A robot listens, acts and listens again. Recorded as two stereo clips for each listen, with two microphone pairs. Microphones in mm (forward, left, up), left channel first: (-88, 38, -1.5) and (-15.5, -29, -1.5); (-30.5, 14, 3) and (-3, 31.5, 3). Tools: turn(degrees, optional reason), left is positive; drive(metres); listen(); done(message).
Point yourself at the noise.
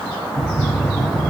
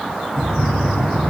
turn(degrees=-140, reason="The knocking: 140° right.")
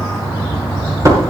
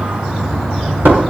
turn(degrees=15, reason="The knocking is now 15° left.")
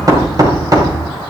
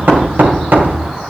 turn(degrees=10, reason="The knocking is now 10° left.")
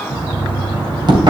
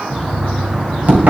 done("Facing the knocking, 2 to 4 m away.")